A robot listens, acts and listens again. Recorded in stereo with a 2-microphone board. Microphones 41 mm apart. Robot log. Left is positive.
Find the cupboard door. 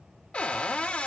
note: The cupboard door: about 30° left or 150° left.
cmd yaw +30
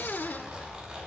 note: So it is at 115° left.
cmd yaw +115
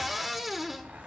end: Facing the cupboard door.